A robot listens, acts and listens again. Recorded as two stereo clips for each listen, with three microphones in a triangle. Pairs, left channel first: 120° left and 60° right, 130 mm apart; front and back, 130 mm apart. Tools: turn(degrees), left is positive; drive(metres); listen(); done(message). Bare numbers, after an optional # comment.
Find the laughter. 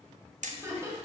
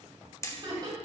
# The laughter: 125° right.
turn(-125)
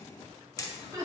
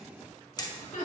done("Facing the laughter.")